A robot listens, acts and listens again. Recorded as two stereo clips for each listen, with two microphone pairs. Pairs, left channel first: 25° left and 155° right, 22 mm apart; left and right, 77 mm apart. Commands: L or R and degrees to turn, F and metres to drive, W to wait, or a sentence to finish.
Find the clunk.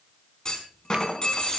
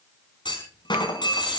L80
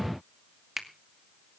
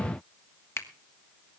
Facing where the clunk came from. I can't hear it now.